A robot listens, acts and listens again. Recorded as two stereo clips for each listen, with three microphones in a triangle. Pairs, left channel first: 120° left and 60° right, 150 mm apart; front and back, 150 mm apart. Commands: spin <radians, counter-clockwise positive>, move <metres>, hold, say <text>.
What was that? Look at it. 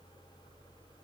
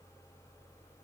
hold
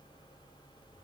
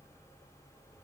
hold
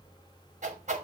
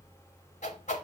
spin -0.52
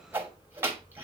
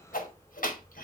spin 0.26
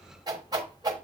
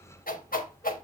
say Facing the whoosh.